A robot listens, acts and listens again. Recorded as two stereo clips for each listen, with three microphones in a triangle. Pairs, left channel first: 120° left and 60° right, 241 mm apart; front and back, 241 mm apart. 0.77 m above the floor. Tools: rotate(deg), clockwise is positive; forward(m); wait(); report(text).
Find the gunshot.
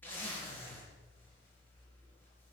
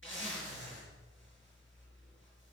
wait()
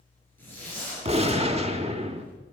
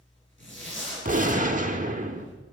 rotate(125)
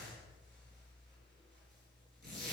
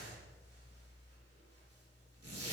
report("I heard a gunshot from this way, but can't make it out now.")